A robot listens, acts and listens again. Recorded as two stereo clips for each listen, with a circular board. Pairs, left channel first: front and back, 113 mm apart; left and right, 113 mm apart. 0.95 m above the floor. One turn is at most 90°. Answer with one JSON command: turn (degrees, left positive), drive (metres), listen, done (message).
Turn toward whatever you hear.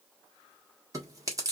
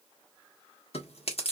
{"turn": 90}
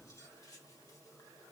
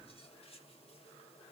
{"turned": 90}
{"turn": 30}
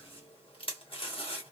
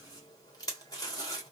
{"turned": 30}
{"turn": 35}
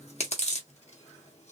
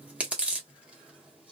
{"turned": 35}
{"turn": -10}
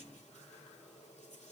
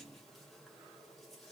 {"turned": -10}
{"listen": true}
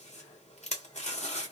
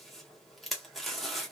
{"done": "Facing the chewing."}